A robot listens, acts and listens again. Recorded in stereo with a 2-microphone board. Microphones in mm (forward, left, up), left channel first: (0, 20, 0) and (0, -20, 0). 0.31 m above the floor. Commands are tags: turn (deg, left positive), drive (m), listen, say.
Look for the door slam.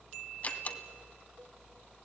<turn deg="35"/>
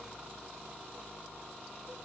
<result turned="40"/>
<listen/>
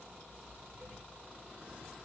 <say>I heard a door slam, but can't make it out now. It was about 5° right or 105° left.</say>